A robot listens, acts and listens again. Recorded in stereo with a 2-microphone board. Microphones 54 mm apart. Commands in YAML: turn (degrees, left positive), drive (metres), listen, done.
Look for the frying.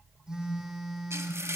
turn: -55
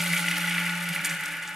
done: "Found it: frying, straight ahead, 1 to 2 m away."